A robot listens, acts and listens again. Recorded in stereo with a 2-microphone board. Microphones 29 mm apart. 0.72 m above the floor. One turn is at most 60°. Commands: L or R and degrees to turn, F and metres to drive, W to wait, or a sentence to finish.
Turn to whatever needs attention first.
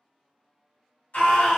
L60
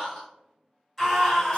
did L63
Found it: a scream, straight ahead.